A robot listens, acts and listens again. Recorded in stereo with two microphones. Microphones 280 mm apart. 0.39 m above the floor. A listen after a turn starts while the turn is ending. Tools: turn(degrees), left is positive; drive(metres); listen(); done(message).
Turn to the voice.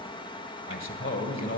turn(degrees=45)
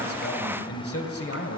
turn(degrees=75)
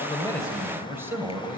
turn(degrees=-10)
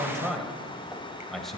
done("Facing the man speaking.")